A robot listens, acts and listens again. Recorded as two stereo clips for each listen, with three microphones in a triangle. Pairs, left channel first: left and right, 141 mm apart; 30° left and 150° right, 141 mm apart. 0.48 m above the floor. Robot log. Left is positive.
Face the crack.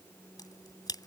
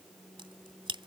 note: The crack: 155° left.
cmd yaw +155
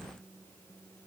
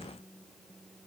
end: I heard a crack from this way, but can't make it out now.